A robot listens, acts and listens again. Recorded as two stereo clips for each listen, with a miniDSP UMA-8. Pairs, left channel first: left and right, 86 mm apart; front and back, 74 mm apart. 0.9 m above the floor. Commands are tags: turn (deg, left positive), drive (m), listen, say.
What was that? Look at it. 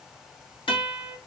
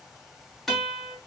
<turn deg="85"/>
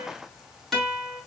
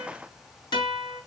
<say>Facing the guitar.</say>